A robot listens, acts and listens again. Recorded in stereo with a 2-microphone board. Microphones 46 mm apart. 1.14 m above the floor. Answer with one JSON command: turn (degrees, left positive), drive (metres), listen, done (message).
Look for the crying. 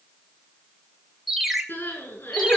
{"turn": 50}
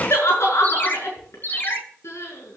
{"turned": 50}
{"turn": 80}
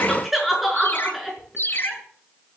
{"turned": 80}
{"done": "Found it: crying, straight ahead."}